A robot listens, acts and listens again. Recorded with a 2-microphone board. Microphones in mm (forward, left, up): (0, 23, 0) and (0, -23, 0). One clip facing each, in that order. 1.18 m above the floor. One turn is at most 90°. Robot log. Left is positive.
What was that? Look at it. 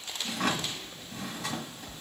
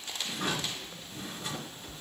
note: The drawer: about 75° left or 105° left.
cmd yaw +75
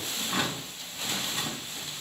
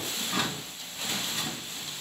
note: So it is at 10° left.
cmd yaw +10
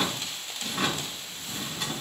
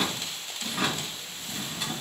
end: Found it: a drawer, straight ahead, 2 to 4 m away.